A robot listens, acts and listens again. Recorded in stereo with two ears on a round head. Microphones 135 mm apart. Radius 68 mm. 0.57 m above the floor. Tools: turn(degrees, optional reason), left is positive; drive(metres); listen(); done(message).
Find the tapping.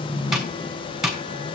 turn(degrees=-30)
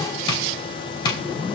turn(degrees=25, reason="So it is at 25° left.")
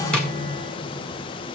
listen()
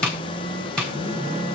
done("Facing the tapping.")